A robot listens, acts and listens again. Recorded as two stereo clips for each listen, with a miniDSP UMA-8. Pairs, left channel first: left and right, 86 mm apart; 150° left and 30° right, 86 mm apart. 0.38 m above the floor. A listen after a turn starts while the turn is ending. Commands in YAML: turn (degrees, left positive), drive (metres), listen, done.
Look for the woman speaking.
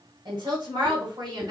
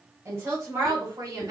turn: -75
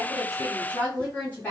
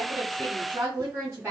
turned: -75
turn: 25
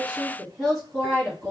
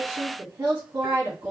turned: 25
turn: 10
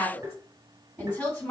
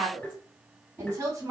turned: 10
turn: 10
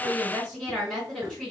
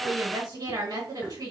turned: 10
done: "Found it: a woman speaking, straight ahead, 2 to 4 m away."